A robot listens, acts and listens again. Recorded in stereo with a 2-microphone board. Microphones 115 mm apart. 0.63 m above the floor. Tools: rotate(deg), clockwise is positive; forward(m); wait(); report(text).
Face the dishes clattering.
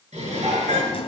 rotate(75)
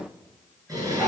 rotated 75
rotate(30)
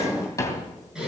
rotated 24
report("Found it: dishes clattering, straight ahead, over 4 m away.")